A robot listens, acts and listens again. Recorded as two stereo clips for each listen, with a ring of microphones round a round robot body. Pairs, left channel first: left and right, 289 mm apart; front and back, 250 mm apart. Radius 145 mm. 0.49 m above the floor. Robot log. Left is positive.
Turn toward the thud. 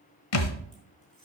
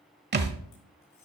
note: The thud: 130° left.
cmd yaw +130
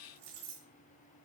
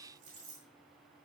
end: I heard a thud from this way, but can't make it out now.